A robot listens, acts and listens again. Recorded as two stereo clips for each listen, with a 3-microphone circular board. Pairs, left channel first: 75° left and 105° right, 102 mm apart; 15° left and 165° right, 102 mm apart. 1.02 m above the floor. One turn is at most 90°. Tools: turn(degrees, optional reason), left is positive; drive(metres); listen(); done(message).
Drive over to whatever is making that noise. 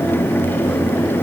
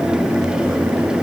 listen()
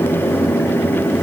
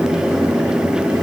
listen()
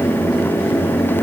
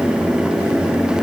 done("I can't make out anything.")